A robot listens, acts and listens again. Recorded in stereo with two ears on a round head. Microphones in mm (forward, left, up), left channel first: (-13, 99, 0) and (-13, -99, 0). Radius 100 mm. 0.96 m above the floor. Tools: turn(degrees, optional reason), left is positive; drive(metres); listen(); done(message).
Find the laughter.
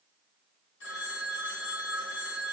listen()
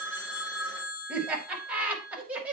turn(degrees=-30)
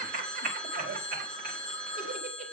turn(degrees=-140, reason="So it is at 140° right.")
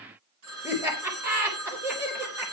turn(degrees=-10, reason="The laughter is now 10° right.")
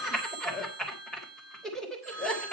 done("Found it: laughter, straight ahead.")